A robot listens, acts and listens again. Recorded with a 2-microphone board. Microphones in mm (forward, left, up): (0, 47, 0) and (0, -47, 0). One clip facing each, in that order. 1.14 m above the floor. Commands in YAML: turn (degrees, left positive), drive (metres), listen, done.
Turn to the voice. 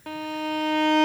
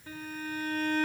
listen: true
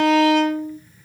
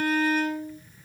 listen: true
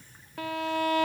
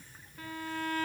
done: "I can't make out anyone speaking to turn to."